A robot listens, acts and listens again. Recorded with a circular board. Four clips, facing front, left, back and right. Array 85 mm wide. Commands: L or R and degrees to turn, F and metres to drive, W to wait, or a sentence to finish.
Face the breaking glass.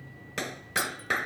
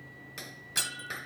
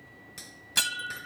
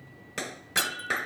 R165
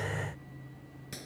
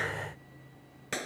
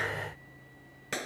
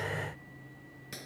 I heard breaking glass from this way, but can't make it out now.